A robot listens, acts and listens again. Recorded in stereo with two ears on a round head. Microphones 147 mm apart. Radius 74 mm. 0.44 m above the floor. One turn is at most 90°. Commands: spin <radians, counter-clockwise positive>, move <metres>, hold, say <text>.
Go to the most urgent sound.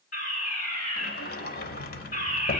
spin 0.96
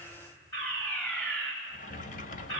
spin 0.17
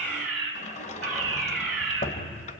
move 1.0
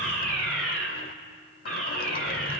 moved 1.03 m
move 1.0
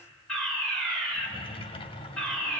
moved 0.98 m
move 1.0
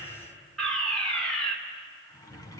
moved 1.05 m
spin 0.17
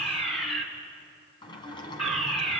move 1.0
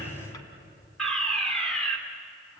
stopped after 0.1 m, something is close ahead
say I am next to the fire alarm.